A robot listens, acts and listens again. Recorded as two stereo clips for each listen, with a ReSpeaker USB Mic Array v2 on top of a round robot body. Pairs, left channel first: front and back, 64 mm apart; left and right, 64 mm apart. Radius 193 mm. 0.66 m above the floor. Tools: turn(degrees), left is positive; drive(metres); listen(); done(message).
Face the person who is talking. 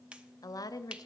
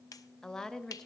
turn(degrees=10)
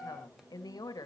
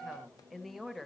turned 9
done("Facing the woman speaking, 1 to 2 m away.")